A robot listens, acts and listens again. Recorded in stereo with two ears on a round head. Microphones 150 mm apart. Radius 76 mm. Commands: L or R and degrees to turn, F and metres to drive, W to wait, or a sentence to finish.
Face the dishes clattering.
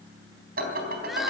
R60
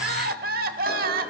W
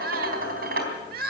R55
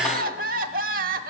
W
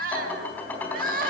L10
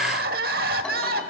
W
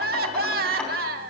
Found it: dishes clattering, straight ahead.